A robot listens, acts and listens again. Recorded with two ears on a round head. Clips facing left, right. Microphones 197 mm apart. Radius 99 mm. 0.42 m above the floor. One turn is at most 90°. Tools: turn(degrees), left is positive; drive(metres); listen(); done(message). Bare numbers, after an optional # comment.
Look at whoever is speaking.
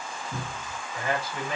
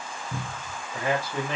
# The man speaking: about 55° right or 125° right.
turn(-55)
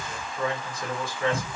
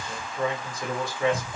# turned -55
# So it is at 20° right.
turn(-20)
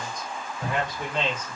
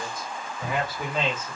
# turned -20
done("Found it: a man speaking, straight ahead, 1 to 2 m away.")